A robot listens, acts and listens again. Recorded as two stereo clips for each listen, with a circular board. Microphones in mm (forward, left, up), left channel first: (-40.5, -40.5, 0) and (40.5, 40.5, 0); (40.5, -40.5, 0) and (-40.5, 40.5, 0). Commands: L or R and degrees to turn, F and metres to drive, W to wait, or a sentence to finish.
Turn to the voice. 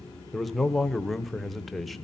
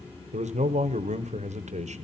L135
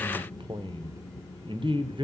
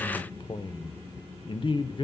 Found it: a man speaking, straight ahead.